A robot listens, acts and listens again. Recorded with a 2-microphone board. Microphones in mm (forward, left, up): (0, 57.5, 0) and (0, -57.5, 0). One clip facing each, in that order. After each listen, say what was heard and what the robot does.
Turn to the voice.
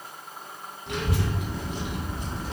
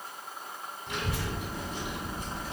Turn 90° left.
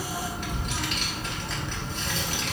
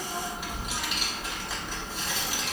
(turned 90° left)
So it is at 10° right. Turn 10° right.
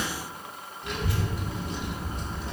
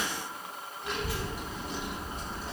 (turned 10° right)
Found it: a child speaking, straight ahead.